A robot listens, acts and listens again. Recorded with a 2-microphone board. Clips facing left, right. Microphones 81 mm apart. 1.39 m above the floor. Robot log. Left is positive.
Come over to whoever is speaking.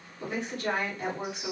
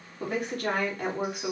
note: The woman speaking: about 50° right or 130° right.
cmd yaw -50
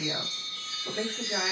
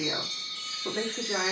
note: So it is at 75° right.
cmd yaw -75
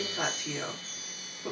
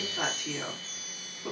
note: The woman speaking is now 10° left.
cmd yaw +10
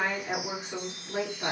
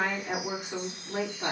cmd fwd 1.0
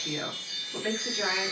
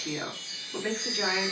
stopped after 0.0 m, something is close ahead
note: The woman speaking is now 10° right.
cmd yaw -10
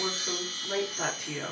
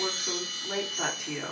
end: Blocked. The woman speaking is further on, straight ahead.